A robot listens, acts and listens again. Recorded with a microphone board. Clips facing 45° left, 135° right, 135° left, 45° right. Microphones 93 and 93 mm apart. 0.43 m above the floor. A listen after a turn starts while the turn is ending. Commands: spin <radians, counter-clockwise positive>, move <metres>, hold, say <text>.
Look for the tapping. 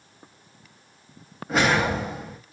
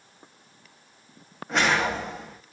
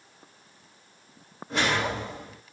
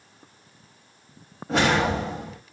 hold
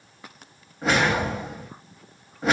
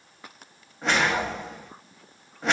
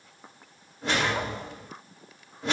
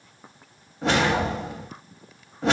hold
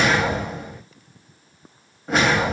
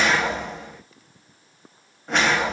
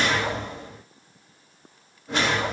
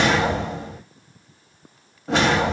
say I can't make out tapping to turn to.